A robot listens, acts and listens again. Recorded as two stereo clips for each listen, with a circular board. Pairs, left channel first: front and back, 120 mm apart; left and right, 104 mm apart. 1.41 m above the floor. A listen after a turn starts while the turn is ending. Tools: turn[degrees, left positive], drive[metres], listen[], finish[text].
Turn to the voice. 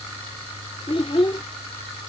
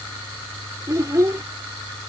Thought: The child speaking: 30° right.
Action: turn[-30]
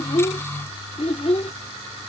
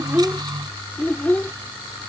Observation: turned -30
Thought: The child speaking is now 20° left.
Action: turn[20]
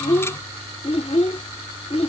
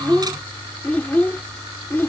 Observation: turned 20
Thought: The child speaking is now 25° left.
Action: turn[25]
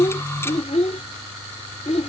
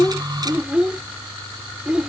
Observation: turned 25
Thought: The child speaking is now 10° right.
Action: turn[-10]
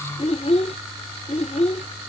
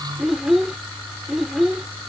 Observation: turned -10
Action: finish[Found it: a child speaking, straight ahead.]